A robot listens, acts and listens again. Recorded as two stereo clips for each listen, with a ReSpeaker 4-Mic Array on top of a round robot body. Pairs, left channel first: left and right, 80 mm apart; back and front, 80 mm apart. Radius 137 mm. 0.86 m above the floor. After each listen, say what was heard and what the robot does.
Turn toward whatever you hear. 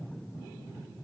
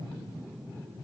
Keep listening.
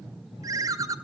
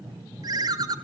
The ringtone: 45° right. Turn 45° right.
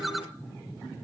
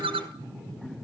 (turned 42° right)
Facing the ringtone, 1 to 2 m away.